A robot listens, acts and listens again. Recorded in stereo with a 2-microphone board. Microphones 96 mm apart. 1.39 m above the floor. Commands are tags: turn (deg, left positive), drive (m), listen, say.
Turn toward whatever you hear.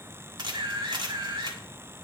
<turn deg="-50"/>
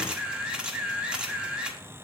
<turn deg="-10"/>
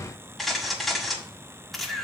<say>Facing the camera shutter.</say>